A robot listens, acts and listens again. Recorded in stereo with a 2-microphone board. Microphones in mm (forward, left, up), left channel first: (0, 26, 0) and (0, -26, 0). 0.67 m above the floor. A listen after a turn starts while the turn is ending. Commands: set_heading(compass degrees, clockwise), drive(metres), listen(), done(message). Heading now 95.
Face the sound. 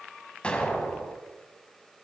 set_heading(75)
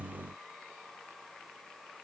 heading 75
listen()
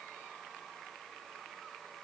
done("I heard an explosion, but can't make it out now. It was about straight ahead or 140° left.")